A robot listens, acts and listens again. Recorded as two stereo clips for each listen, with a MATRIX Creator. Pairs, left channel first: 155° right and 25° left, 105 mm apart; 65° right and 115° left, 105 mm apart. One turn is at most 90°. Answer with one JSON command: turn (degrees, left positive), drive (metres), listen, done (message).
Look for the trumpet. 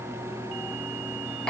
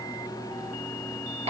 {"listen": true}
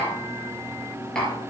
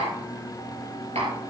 {"listen": true}
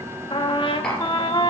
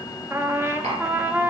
{"turn": 90}
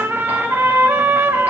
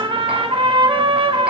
{"turn": 90}
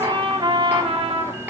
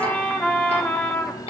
{"turn": 10}
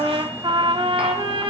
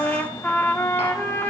{"done": "Found it: a trumpet, straight ahead."}